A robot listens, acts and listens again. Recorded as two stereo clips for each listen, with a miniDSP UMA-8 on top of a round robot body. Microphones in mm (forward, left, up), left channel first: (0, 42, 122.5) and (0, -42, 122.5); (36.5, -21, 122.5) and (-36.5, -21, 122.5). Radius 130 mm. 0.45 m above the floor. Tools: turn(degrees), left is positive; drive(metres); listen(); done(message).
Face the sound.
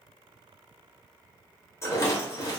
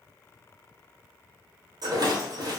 turn(degrees=150)
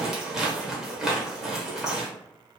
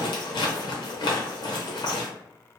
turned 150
done("Found it: a rattle, straight ahead, under 1 m away.")